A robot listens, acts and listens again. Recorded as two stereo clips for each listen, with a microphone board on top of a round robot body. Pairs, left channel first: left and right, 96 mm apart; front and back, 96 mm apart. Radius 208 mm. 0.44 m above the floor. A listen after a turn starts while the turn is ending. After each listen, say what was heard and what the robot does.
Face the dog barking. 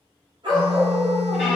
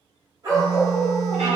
The dog barking: 120° right. Turn 120° right.
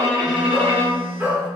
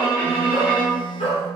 The dog barking is now 15° right. Turn 15° right.
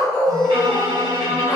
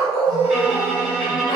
The dog barking is now 35° left. Turn 35° left.
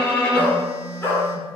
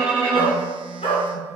The dog barking is now 25° left. Turn 25° left.
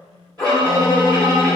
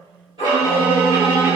The dog barking is now 10° left. Turn 10° left.
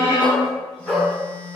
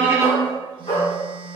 Facing the dog barking.